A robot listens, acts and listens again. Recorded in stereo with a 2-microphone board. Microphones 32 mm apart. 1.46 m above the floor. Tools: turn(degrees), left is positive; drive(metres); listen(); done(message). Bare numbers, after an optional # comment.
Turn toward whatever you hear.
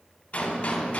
# The gunshot: about 45° left or 135° left.
turn(45)
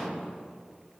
listen()
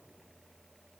done("I heard a gunshot, but can't make it out now. It was about straight ahead or 90° left.")